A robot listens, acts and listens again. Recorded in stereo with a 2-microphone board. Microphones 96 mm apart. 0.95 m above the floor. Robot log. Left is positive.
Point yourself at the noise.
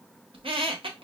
note: The squeak: about 70° right or 110° right.
cmd yaw -70
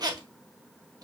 note: So it is at 40° right.
cmd yaw -40
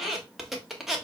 end: Found it: a squeak, straight ahead, under 1 m away.